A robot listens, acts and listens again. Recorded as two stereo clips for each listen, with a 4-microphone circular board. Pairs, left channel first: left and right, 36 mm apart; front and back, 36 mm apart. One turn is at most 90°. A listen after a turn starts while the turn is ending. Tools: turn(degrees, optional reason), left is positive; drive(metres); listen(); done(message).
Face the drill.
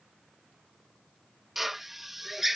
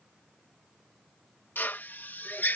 done("Found it: a drill, straight ahead.")